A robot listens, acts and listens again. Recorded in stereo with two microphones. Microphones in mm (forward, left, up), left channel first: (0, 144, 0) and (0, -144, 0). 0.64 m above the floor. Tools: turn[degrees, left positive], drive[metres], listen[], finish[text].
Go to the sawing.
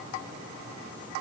Action: listen[]
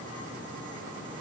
Action: listen[]
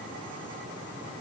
Action: finish[I can't make out sawing to turn to.]